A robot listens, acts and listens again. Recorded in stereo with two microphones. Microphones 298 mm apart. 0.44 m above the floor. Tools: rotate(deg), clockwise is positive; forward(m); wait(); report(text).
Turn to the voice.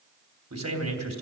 rotate(60)
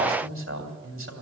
rotate(50)
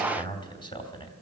rotate(-20)
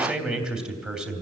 report("Found it: a man speaking, straight ahead.")